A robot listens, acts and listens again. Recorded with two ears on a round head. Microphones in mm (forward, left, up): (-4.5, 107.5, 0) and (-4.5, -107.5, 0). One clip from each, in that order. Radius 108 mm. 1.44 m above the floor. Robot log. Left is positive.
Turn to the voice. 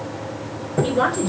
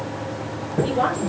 note: The woman speaking: about 45° left or 135° left.
cmd yaw +45
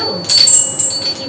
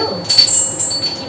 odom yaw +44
cmd idle
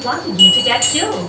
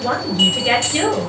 end: Found it: a woman speaking, straight ahead, over 4 m away.